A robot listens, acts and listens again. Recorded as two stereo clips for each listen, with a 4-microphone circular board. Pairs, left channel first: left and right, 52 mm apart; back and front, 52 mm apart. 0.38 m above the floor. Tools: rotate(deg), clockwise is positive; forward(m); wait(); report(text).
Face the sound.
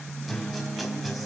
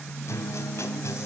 rotate(-180)
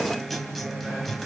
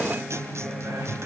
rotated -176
report("Found it: a guitar, straight ahead, 2 to 4 m away.")